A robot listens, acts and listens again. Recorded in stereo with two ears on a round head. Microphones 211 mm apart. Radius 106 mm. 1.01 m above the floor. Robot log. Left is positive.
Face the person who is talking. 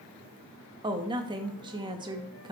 note: The woman speaking: about 20° right or 160° right.
cmd yaw -20
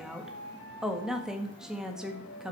end: Facing the woman speaking.